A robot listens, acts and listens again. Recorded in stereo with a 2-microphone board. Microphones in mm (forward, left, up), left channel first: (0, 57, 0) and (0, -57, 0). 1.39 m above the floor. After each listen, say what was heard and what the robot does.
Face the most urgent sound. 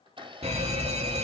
The fire alarm: about 60° right or 120° right. Turn 60° right.
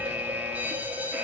So it is at 15° right. Turn 15° right.
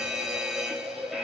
Found it: a fire alarm, straight ahead.